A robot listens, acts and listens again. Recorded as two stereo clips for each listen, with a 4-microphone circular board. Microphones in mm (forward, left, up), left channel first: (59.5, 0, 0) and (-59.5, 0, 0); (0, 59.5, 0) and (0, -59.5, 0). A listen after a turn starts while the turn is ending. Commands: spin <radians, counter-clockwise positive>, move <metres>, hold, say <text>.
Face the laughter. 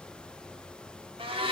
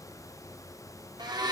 hold
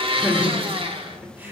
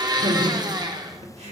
spin -1.92
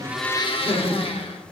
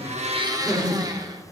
spin -0.17
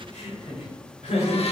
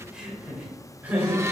spin -0.26
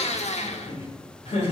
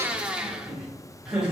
say Facing the laughter.